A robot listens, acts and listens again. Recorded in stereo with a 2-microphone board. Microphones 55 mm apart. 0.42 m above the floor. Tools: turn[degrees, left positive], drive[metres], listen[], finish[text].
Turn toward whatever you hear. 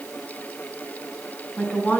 Thought: The woman speaking: about 25° left or 155° left.
Action: turn[25]
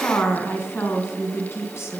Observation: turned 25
Thought: So it is at 125° left.
Action: turn[125]
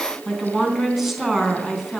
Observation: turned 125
Action: finish[Found it: a woman speaking, straight ahead.]